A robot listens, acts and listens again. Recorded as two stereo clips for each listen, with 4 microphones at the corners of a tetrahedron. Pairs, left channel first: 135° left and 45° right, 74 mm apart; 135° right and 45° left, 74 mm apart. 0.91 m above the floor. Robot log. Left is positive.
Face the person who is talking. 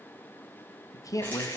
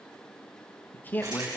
note: The man speaking: 165° left.
cmd yaw +165
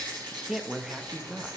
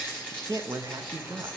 note: The man speaking is now 35° left.
cmd yaw +35
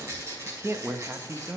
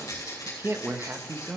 end: Found it: a man speaking, straight ahead.